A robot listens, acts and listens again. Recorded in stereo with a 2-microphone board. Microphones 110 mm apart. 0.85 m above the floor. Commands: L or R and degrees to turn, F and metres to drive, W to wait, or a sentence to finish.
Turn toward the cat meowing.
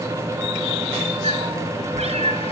R70
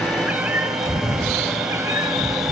R30
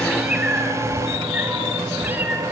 R15
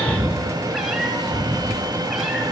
Found it: a cat meowing, straight ahead.